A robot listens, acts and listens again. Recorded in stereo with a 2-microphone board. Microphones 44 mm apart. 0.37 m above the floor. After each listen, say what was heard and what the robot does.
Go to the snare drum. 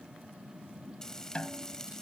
The snare drum: about 25° left or 155° left. Turn 25° left.
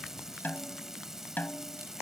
So it is at 125° left. Turn 125° left.
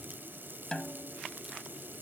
The snare drum is now 20° left. Turn 20° left.
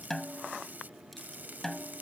The snare drum is now 10° left. Turn 10° left.
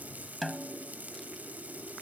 Drive 1.0 m forward.
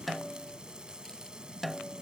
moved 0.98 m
Drive 1.0 m forward.
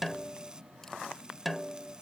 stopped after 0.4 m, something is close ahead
I am next to the snare drum.